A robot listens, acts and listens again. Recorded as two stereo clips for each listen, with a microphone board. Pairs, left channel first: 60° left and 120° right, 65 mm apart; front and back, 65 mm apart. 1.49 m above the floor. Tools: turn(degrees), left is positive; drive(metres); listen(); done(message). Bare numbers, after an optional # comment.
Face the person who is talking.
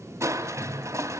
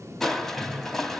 listen()
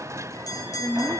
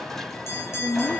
# The woman speaking: 10° left.
turn(10)
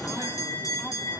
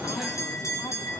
listen()
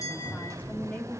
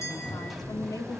done("Facing the woman speaking.")